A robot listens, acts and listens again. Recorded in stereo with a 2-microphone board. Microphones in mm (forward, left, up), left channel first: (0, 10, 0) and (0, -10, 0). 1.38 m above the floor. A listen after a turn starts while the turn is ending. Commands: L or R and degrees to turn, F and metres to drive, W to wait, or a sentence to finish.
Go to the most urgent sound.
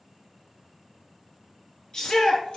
L40
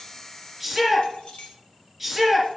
F1.0
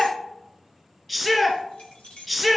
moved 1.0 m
L10
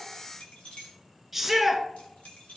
F1.0
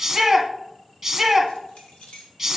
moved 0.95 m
F1.0
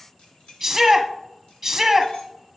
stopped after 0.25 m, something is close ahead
I am next to the shout.